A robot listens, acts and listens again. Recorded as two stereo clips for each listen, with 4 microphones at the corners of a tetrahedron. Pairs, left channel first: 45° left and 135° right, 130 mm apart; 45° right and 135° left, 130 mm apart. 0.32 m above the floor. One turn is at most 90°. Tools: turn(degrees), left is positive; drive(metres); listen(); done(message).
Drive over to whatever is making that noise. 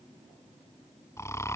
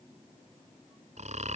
turn(degrees=90)
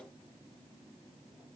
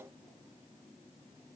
turn(degrees=25)
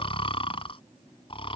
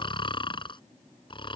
drive(metres=1.0)
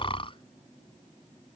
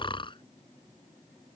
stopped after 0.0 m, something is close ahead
done("Something is in my way. I am facing the snoring but have not reached it.")